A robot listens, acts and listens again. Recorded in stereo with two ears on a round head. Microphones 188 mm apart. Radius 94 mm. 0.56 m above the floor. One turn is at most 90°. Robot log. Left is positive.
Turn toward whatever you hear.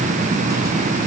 cmd idle
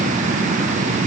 cmd idle
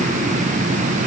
end: I can't make out anything.